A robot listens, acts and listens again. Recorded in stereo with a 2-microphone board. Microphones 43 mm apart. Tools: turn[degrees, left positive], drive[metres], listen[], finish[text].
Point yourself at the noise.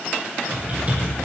Thought: The typing on a keyboard: about 35° right or 145° right.
Action: turn[-35]
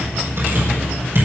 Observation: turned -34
Thought: So it is at 110° right.
Action: turn[-110]
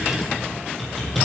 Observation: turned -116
Action: finish[Facing the typing on a keyboard.]